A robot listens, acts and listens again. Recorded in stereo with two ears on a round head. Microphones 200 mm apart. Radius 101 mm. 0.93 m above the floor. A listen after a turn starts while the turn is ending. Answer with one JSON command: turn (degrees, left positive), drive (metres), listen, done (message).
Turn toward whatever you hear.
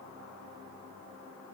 {"listen": true}
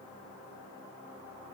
{"listen": true}
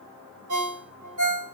{"turn": -75}
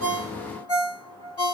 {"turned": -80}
{"done": "Found it: a ringtone, straight ahead, 1 to 2 m away."}